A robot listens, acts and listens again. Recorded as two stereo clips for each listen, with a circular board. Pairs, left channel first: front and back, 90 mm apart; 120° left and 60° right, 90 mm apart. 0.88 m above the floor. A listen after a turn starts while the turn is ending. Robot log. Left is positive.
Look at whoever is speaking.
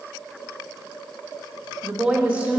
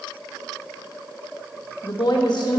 note: The woman speaking: 105° left.
cmd yaw +105
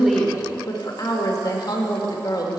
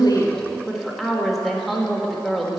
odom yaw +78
note: The woman speaking is now 30° left.
cmd yaw +30
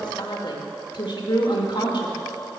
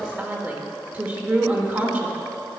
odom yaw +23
end: Found it: a woman speaking, straight ahead, 1 to 2 m away.